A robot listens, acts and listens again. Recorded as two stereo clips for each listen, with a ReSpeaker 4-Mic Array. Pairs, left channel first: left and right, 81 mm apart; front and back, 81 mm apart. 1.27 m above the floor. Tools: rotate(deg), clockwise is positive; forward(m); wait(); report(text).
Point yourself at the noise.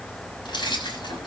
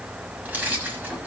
rotate(-110)
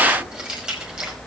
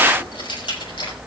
rotate(10)
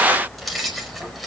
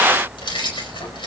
report("Facing the keys jangling, over 4 m away.")